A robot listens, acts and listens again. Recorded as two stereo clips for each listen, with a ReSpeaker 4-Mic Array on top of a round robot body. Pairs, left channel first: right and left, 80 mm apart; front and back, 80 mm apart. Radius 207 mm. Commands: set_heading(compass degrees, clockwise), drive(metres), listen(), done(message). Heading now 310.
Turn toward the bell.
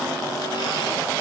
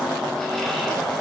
listen()
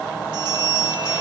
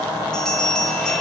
set_heading(230)
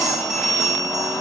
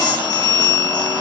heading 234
done("Found it: a bell, straight ahead, 2 to 4 m away.")